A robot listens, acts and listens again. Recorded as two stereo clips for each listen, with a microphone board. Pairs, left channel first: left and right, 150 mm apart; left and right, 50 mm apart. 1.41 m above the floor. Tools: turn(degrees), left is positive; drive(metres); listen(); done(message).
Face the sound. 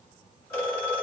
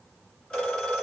turn(degrees=20)
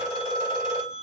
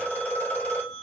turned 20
turn(degrees=140)
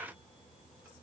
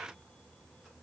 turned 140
listen()
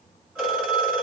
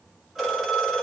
turn(degrees=-10)
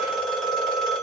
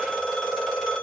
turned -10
done("Facing the phone ringing.")